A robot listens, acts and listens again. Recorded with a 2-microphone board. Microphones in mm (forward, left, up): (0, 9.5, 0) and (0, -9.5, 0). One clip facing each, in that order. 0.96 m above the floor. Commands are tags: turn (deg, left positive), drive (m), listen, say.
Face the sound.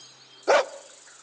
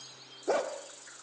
<turn deg="60"/>
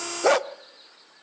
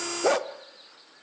<turn deg="30"/>
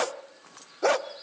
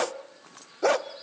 <say>Found it: a dog barking, straight ahead, under 1 m away.</say>